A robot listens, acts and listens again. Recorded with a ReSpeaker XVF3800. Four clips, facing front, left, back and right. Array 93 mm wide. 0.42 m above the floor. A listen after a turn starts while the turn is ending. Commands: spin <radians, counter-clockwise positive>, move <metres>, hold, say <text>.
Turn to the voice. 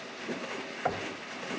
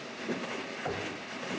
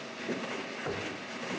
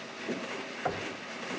hold
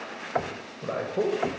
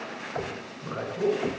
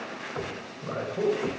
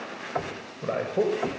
spin -1.05
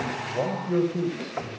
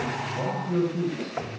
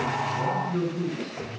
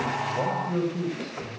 say Facing the man speaking.